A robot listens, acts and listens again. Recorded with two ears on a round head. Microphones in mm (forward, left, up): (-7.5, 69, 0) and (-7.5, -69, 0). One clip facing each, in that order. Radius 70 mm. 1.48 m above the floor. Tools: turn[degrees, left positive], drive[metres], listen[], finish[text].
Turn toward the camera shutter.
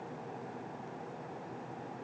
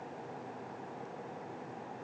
Action: listen[]
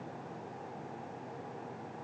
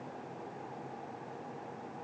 Action: listen[]
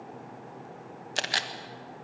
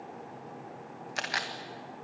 Thought: The camera shutter: about 40° left or 140° left.
Action: turn[40]
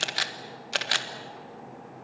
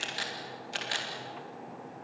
Thought: So it is at 100° left.
Action: turn[100]
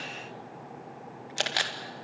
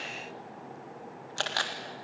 Thought: The camera shutter is now 20° left.
Action: turn[20]
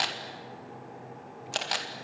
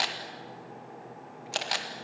Action: finish[Facing the camera shutter.]